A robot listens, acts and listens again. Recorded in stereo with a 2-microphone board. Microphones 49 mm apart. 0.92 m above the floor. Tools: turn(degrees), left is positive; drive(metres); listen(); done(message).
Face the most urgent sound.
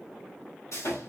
listen()
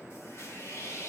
listen()
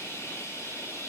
done("I can't make out anything urgent to turn to.")